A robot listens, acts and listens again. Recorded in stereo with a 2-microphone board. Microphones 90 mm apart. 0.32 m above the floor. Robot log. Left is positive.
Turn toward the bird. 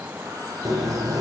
note: The bird: about 40° right or 140° right.
cmd yaw -40
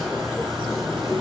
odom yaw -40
end: Facing the bird, 2 to 4 m away.